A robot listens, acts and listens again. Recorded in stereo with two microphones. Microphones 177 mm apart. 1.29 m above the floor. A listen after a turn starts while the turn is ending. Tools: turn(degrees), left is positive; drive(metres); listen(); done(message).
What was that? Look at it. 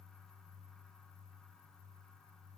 listen()
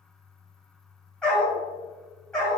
turn(degrees=30)
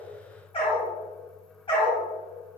turn(degrees=150)
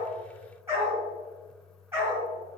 turn(degrees=-15)
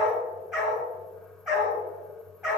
done("Facing the dog barking, over 4 m away.")